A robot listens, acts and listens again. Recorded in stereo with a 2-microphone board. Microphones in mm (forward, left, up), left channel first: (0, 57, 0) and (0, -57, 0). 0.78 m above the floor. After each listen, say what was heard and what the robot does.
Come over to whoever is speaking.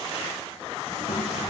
Turn 90° left.
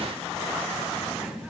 Drive 1.0 m forward.
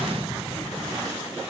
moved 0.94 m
The child speaking is now 15° right. Turn 15° right.
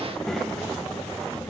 Drive 1.0 m forward.
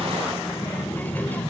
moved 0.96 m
The child speaking is now 15° left. Turn 15° left.
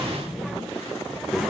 Drive 1.0 m forward.
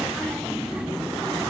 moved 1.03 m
The child speaking is now 10° right. Turn 10° right.
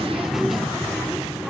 Drive 1.0 m forward.
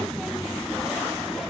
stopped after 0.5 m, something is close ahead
Arrived at the child speaking, straight ahead.